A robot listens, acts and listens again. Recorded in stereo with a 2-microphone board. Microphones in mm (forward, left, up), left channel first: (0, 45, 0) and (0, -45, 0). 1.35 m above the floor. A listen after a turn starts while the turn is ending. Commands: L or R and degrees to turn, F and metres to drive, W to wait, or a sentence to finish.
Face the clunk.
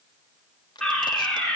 W
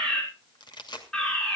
W
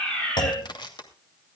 L60
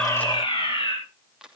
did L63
W
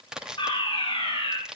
I heard a clunk, but can't make it out now. It was about straight ahead or 55° left.